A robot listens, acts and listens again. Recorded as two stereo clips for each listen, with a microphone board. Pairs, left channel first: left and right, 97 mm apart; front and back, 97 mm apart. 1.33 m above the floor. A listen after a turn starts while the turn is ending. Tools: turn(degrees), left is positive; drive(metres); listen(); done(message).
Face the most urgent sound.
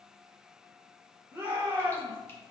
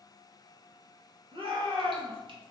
turn(degrees=-160)
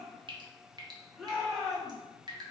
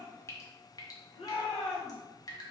done("Found it: a shout, straight ahead.")